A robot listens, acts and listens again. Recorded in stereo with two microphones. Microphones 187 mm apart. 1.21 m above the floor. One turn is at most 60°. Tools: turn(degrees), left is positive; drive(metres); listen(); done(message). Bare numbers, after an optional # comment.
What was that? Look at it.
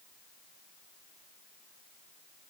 listen()
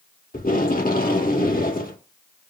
# The tape being pulled: about 50° left or 130° left.
turn(50)
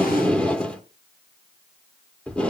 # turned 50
done("Facing the tape being pulled.")